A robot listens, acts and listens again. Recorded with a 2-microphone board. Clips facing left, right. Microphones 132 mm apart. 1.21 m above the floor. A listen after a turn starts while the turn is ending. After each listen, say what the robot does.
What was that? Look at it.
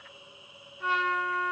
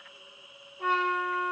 Turn 60° right.
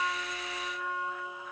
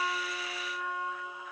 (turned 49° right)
Turn 15° right.
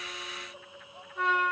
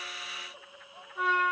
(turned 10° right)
Facing the trumpet, 1 to 2 m away.